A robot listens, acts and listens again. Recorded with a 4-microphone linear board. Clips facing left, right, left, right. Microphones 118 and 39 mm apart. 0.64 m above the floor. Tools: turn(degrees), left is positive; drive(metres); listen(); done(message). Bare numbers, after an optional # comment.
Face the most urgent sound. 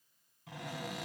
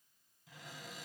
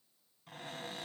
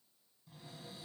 listen()
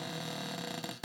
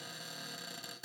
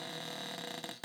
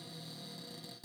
listen()
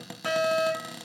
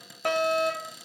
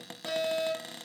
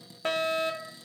# The fire alarm: about 60° right or 120° right.
turn(-60)
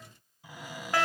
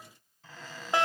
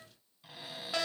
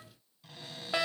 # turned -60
# So it is at 25° right.
turn(-25)
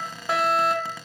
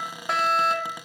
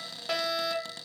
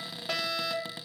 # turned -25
done("Found it: a fire alarm, straight ahead, 2 to 4 m away.")